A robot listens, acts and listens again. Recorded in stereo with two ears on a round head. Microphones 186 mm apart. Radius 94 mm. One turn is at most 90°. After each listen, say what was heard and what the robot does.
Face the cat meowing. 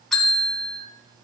Keep listening.
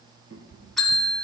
The cat meowing: about 45° right or 135° right. Turn 45° right.
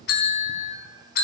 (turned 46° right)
Keep listening.
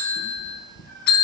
So it is at 30° left. Turn 30° left.
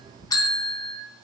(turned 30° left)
The cat meowing is now 10° left. Turn 10° left.
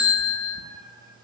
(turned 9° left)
The cat meowing is now 10° left. Turn 10° left.
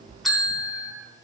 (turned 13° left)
Found it: a cat meowing, straight ahead.